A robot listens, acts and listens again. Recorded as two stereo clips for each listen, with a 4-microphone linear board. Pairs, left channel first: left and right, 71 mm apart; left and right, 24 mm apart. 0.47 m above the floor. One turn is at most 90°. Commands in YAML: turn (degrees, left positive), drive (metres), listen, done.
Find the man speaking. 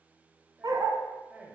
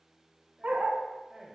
turn: -20
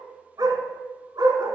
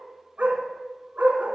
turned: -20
listen: true
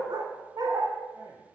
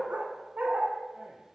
turn: -90
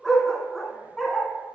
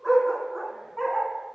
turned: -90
turn: -30
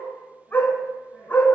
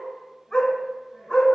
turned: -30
listen: true
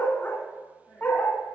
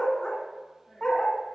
done: "Facing the man speaking, 2 to 4 m away."